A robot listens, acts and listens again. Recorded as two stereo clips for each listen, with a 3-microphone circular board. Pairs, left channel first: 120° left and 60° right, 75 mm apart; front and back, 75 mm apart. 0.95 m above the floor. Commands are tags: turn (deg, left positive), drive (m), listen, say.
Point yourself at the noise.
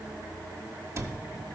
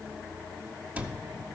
<turn deg="-110"/>
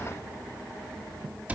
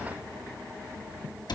<turn deg="10"/>
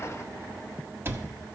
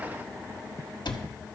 <say>Facing the cupboard door.</say>